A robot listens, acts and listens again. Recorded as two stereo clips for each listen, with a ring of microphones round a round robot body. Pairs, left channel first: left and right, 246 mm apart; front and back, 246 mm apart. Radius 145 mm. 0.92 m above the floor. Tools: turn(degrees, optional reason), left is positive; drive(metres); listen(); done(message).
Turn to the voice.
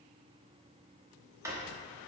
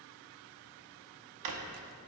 listen()
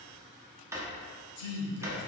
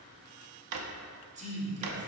turn(degrees=120, reason="The man speaking: 120° left.")
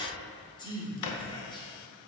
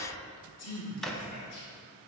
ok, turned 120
turn(degrees=20, reason="The man speaking is now 20° left.")
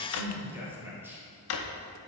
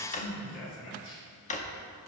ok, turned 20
turn(degrees=-10, reason="The man speaking is now 10° right.")
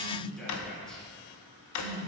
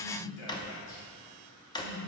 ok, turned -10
done("Facing the man speaking, 2 to 4 m away.")